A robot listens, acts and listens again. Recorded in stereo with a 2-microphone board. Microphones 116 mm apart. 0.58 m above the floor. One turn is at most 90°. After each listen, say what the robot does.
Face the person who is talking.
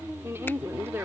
Turn 20° right.
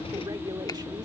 Turn 90° right.
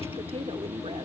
Turn 45° right.
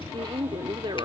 Turn 55° right.
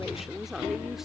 Found it: a woman speaking, straight ahead.